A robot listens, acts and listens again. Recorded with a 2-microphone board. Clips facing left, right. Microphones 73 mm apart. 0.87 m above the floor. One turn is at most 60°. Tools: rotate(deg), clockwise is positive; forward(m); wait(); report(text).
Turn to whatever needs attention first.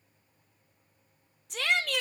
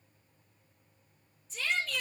rotate(-60)
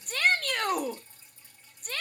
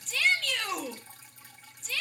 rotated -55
rotate(-45)
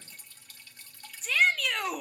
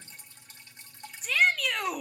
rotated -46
report("Facing the shout, under 1 m away.")